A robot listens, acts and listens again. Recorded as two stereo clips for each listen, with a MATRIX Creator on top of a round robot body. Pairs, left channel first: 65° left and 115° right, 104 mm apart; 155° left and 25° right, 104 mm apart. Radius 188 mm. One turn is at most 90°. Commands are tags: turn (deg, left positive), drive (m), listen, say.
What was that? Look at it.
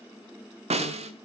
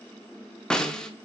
<turn deg="-90"/>
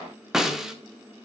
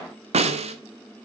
<turn deg="-25"/>
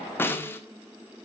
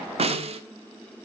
<say>Facing the snare drum.</say>